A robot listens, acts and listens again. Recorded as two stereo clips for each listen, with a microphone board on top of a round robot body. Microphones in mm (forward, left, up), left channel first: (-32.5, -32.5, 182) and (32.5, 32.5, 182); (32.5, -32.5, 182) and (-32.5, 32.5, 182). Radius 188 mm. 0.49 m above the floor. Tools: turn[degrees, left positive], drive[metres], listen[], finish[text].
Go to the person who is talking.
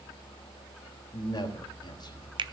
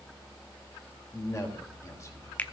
Thought: The man speaking: 100° right.
Action: turn[-100]
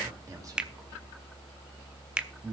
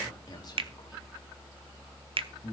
Action: drive[1.0]
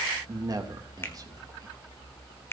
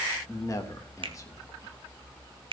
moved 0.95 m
Action: drive[1.0]
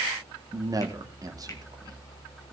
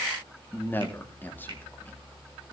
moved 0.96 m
Thought: The man speaking is now 15° left.
Action: turn[15]
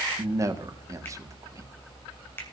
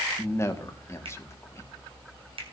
Action: drive[1.0]
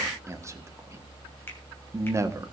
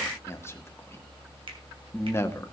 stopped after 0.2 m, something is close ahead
Action: finish[Arrived at the man speaking, straight ahead.]